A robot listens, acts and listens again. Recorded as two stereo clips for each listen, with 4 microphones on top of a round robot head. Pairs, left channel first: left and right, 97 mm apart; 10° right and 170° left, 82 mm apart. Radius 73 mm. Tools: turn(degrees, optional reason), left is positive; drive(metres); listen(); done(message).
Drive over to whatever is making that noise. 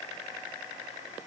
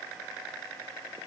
listen()
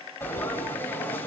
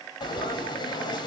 turn(degrees=20, reason="The frying: 20° left.")
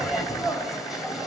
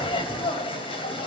drive(metres=1.0)
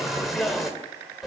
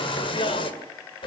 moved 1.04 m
drive(metres=1.0)
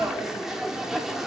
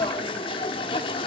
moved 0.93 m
drive(metres=1.0)
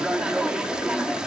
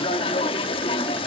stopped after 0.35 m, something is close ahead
done("I am next to the frying.")